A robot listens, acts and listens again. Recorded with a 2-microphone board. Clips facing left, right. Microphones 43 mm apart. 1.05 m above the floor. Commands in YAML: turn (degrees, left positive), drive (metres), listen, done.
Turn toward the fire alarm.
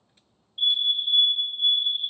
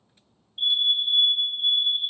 turn: -30
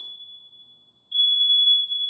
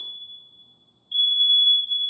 turn: -145
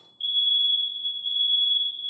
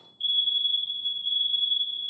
turn: 10
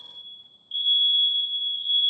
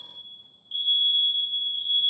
done: "Found it: a fire alarm, straight ahead, 2 to 4 m away."